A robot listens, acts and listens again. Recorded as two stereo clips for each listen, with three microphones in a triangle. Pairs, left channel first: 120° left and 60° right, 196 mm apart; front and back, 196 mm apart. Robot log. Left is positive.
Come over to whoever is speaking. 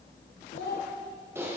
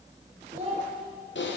note: The child speaking: 125° left.
cmd yaw +125
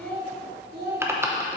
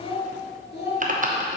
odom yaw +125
note: The child speaking is now 30° right.
cmd yaw -30
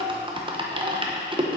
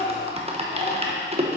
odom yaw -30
cmd idle
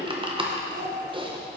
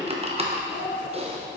note: The child speaking is now 15° right.
cmd yaw -15
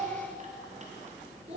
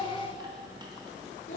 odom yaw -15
cmd fwd 1.0
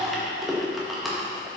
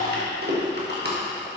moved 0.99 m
cmd idle
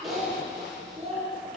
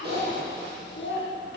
cmd fwd 1.0
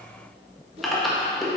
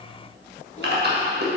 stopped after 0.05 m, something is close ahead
cmd idle
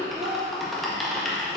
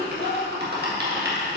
cmd idle
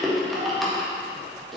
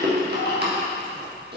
end: Facing where the child speaking came from. I can't hear it now. I did not reach it.